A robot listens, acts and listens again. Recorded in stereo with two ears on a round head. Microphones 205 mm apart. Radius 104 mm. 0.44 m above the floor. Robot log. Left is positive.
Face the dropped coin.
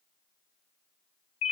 cmd idle
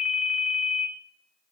cmd idle
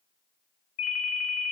end: I can't make out a dropped coin, only a ringtone.